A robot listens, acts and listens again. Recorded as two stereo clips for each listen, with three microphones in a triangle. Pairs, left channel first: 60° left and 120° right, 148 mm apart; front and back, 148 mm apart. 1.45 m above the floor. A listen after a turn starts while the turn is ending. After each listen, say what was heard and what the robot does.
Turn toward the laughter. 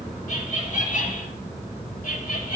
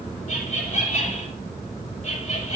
The laughter: 40° left. Turn 40° left.
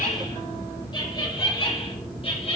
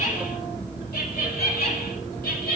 The laughter is now 10° left. Turn 10° left.
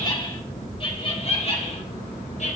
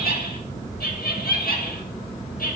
The laughter is now 20° left. Turn 20° left.
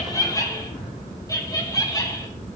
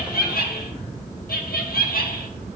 Facing the laughter, 1 to 2 m away.